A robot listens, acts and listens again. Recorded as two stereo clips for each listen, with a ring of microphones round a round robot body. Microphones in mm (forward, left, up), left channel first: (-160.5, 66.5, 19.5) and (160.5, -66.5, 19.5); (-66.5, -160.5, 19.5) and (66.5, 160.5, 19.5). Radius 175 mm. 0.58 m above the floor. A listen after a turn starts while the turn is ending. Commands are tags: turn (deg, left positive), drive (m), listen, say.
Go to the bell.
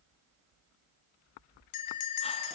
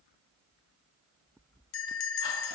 <turn deg="-165"/>
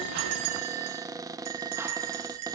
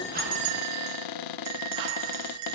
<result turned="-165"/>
<turn deg="25"/>
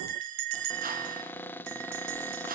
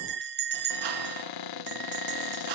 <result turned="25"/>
<drive m="1.0"/>
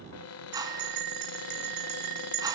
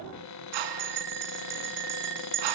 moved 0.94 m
<turn deg="10"/>
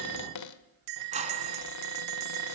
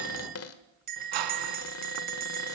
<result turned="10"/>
<drive m="1.0"/>
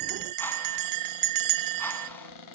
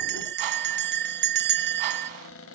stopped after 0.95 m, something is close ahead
<say>I am next to the bell.</say>